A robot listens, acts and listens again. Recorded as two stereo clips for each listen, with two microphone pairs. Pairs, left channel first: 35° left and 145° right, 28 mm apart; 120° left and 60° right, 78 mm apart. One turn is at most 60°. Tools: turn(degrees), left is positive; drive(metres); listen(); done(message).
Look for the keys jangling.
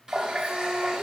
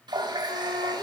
listen()
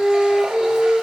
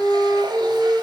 listen()
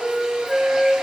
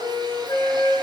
done("I can't make out keys jangling, only a flute and a running tap.")